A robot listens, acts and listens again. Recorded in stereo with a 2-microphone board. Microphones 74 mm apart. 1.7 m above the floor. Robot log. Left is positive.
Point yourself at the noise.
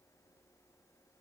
cmd idle
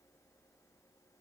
cmd idle
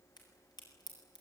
cmd yaw +90
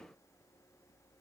end: I heard a crack from this way, but can't make it out now.